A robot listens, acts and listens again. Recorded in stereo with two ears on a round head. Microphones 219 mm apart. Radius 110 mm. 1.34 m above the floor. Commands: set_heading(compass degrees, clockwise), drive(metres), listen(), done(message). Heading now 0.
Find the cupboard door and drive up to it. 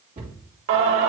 set_heading(35)
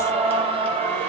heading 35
listen()
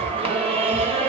listen()
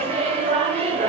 done("I heard a cupboard door, but can't make it out now. It was about straight ahead or 110° right. I did not reach it.")